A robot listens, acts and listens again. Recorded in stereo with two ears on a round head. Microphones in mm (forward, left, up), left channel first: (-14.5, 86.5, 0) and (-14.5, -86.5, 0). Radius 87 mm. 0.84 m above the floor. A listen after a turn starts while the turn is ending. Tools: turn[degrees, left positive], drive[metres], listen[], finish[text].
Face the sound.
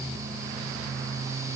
Action: listen[]
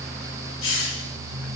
Action: turn[90]
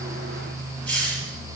Action: finish[Found it: a hiss, straight ahead, over 4 m away.]